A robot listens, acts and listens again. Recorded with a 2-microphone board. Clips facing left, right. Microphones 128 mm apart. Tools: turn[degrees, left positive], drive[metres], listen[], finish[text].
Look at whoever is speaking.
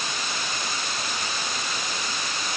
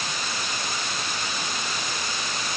Action: listen[]
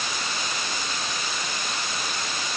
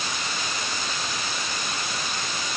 Action: listen[]
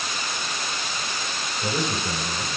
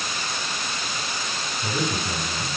Thought: The man speaking: about 60° left or 120° left.
Action: turn[60]
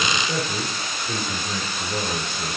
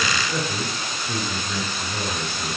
Thought: So it is at 60° left.
Action: turn[60]
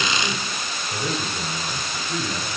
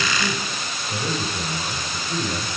Thought: The man speaking is now 15° right.
Action: turn[-15]
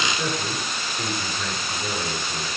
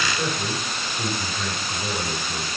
Action: finish[Found it: a man speaking, straight ahead, over 4 m away.]